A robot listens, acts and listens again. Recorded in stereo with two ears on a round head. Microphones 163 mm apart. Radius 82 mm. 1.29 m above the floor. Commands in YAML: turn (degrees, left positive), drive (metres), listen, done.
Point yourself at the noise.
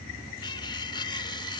turn: 25
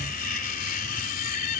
turn: 130
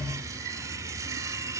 turn: -20
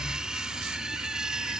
done: "Facing the cutlery clinking."